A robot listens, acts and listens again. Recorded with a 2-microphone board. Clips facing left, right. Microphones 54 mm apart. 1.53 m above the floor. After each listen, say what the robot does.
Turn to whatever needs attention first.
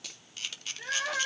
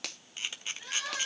Turn 50° left.
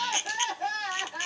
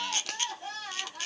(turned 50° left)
Turn 80° left.
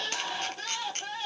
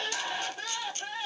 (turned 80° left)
Turn 20° right.
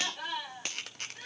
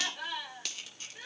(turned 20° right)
Found it: crying, straight ahead, over 4 m away.